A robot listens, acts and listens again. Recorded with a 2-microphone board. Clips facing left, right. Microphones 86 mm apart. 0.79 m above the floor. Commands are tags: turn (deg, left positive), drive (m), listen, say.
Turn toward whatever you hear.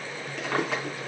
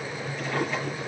<turn deg="90"/>
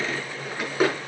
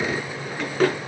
<turn deg="10"/>
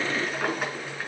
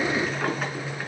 <say>Facing the drawer, over 4 m away.</say>